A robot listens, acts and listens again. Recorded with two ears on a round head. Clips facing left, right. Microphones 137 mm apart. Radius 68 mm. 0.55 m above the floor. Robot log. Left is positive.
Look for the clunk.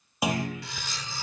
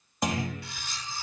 cmd yaw +30
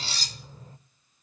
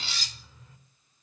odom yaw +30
cmd idle
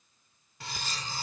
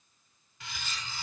end: I heard a clunk, but can't make it out now. It was about 25° right or 145° left.